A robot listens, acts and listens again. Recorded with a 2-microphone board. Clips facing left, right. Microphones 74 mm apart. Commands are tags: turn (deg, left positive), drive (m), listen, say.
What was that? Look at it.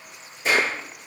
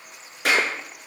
<turn deg="-65"/>
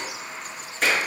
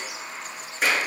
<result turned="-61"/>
<say>Found it: a clap, straight ahead, over 4 m away.</say>